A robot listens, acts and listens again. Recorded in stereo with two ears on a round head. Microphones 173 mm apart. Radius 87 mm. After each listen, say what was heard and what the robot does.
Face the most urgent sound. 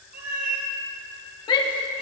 The shout: about 25° left or 155° left. Turn 25° left.
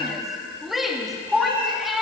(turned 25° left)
Found it: a shout, straight ahead.